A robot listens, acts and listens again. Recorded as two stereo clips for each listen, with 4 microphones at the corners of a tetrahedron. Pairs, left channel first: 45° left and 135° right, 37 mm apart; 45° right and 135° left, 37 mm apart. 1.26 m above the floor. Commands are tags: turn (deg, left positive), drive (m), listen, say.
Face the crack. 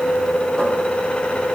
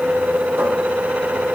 <listen/>
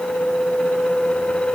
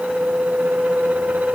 <listen/>
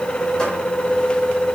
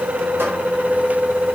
<say>I can't make out a crack to turn to.</say>